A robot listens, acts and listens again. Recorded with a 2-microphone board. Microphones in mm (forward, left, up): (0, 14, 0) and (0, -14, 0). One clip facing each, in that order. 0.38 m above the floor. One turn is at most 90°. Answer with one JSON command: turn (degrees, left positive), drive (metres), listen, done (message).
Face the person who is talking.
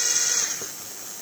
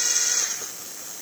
{"listen": true}
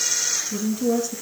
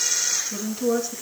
{"turn": -20}
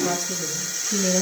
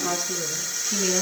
{"turn": -90}
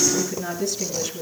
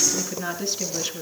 {"turn": -35}
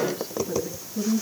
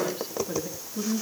{"turn": -10}
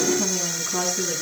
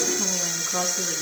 {"done": "Facing the woman speaking, over 4 m away."}